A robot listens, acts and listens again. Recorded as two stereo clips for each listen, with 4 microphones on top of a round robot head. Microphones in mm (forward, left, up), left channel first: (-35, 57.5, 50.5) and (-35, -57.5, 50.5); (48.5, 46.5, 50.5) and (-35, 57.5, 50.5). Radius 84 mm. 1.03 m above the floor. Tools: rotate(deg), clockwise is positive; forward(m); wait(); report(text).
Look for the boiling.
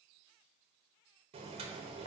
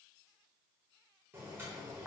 rotate(120)
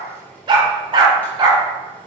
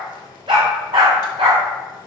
rotate(-15)
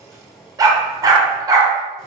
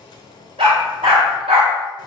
report("Found it: boiling, straight ahead, 1 to 2 m away.")